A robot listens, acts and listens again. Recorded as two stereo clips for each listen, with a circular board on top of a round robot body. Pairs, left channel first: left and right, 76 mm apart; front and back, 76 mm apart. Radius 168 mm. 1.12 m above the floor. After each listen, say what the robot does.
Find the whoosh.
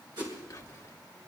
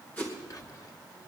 Turn 65° right.
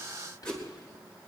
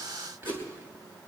Turn 15° left.
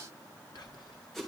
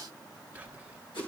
Facing the whoosh.